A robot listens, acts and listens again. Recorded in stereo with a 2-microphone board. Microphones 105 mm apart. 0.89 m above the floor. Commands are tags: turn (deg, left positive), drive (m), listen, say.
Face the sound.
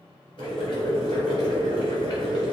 <turn deg="50"/>
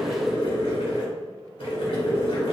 <turn deg="75"/>
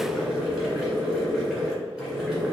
<say>Facing the boiling, 1 to 2 m away.</say>